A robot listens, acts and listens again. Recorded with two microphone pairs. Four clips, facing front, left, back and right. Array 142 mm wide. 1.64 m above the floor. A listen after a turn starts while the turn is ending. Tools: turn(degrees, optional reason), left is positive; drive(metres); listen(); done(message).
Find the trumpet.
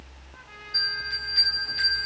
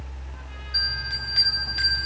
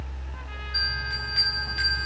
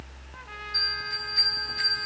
listen()
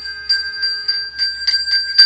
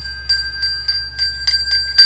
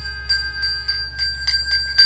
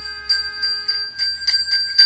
listen()
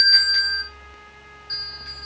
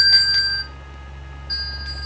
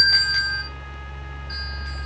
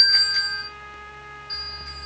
done("I can't make out a trumpet to turn to.")